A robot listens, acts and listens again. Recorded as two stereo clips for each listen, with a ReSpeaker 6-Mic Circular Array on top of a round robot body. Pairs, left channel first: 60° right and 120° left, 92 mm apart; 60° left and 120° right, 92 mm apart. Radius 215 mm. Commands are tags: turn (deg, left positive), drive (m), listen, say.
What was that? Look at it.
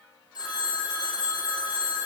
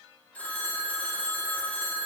<turn deg="-15"/>
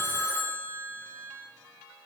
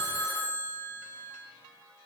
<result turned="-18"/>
<say>Facing the phone ringing, 1 to 2 m away.</say>